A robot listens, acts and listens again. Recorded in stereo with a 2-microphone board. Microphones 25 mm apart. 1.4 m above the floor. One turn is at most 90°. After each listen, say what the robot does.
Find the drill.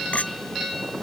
Keep listening.
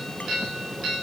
Keep listening.
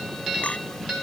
I can't make out a drill to turn to.